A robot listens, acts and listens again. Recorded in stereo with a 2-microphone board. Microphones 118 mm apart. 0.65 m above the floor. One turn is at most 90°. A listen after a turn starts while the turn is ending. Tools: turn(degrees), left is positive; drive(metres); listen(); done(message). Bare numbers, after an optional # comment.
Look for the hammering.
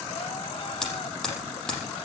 turn(30)
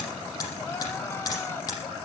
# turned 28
# So it is at 145° left.
turn(90)
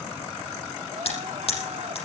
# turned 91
# The hammering is now 55° left.
turn(55)
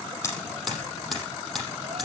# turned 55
done("Found it: hammering, straight ahead, over 4 m away.")